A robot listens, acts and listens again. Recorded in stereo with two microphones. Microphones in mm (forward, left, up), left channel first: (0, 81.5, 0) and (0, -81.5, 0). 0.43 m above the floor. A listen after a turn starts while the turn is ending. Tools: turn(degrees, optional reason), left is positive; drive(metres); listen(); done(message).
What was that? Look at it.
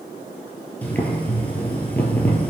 turn(degrees=30)
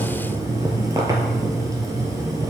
turn(degrees=-20, reason="So it is at 20° right.")
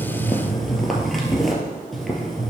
done("Found it: boiling, straight ahead.")